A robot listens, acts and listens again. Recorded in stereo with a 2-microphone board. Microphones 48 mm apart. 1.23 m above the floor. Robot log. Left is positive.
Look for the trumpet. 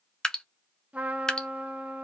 note: The trumpet: about 30° right or 150° right.
cmd yaw -30
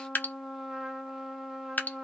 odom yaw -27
end: Facing the trumpet.